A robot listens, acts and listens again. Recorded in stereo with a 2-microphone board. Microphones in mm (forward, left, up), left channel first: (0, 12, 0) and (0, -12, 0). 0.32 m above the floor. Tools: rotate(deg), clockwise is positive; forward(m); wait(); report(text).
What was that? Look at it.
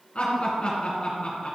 rotate(-50)
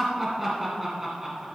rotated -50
rotate(10)
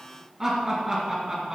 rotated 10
rotate(15)
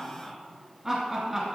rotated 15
rotate(15)
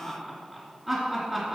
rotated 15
report("Found it: laughter, straight ahead, 2 to 4 m away.")